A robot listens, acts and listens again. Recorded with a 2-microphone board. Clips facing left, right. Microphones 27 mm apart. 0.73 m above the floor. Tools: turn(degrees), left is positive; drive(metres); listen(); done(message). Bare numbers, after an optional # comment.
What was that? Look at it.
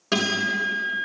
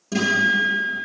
# The guitar: about 50° left or 130° left.
turn(50)
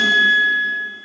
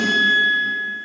# So it is at 80° left.
turn(80)
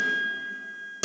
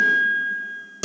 done("Found it: a guitar, straight ahead.")